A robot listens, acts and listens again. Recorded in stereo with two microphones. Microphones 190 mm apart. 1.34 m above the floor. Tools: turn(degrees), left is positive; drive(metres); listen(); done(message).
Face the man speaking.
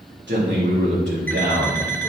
turn(degrees=-70)
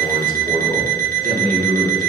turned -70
turn(degrees=-50)
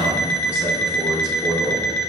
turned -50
turn(degrees=-10)
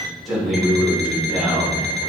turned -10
done("Found it: a man speaking, straight ahead, over 4 m away.")